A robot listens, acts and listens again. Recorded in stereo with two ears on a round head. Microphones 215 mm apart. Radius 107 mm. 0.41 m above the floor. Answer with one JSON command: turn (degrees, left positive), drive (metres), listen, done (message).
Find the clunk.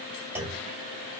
{"turn": -30}
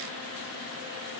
{"listen": true}
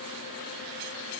{"done": "I heard a clunk, but can't make it out now. It was about 20° left or 140° right."}